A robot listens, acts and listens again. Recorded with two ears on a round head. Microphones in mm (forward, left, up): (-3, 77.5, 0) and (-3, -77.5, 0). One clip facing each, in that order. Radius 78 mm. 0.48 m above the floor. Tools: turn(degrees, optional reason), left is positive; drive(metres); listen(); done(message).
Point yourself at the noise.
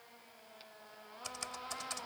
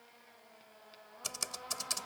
turn(degrees=-55, reason="The typing on a keyboard: about 55° right or 125° right.")
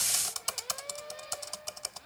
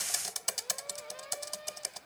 turn(degrees=-15, reason="So it is at 15° right.")
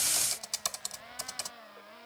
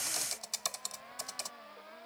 done("Found it: typing on a keyboard, straight ahead.")